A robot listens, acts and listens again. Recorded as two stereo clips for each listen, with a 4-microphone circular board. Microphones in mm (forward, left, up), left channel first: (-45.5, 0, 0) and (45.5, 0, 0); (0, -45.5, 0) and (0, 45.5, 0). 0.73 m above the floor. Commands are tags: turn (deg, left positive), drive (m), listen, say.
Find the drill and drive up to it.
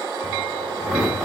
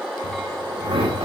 <turn deg="85"/>
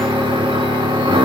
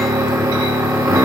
<turn deg="35"/>
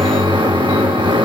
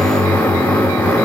<turn deg="-20"/>
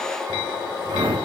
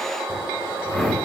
<drive m="1.0"/>
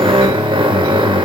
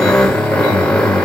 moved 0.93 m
<turn deg="-10"/>
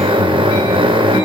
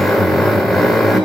<drive m="1.0"/>
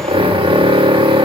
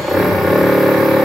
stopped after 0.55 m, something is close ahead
<say>I am next to the drill.</say>